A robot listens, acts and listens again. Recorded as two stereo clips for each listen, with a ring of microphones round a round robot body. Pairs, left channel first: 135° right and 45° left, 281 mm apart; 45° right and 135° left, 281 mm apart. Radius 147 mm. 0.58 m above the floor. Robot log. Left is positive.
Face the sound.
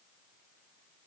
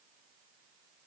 cmd idle
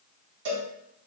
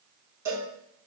note: The cowbell: 55° left.
cmd yaw +55
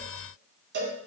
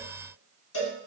note: The cowbell is now 10° right.
cmd yaw -10
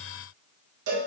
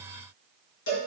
end: Facing the cowbell.